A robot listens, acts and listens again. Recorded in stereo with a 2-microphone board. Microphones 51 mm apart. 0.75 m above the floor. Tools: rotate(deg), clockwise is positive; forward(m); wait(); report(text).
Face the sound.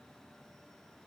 wait()
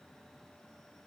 wait()
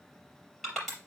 rotate(-30)
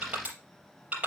rotate(25)
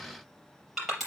report("Facing the crushing, over 4 m away.")